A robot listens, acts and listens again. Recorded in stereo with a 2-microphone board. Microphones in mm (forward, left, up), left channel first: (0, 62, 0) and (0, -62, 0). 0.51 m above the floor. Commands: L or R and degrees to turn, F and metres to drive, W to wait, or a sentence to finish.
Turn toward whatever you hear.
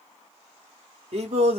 R55
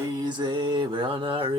R45
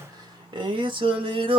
R45
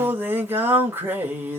R15
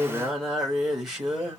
Facing the singing.